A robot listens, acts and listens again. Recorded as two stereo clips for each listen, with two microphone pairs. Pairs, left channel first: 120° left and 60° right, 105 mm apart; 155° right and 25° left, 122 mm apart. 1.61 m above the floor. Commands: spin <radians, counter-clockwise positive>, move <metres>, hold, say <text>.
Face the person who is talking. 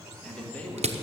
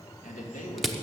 spin -2.79
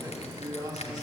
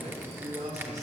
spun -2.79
spin -0.17
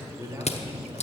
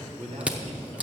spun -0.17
say Facing the man speaking.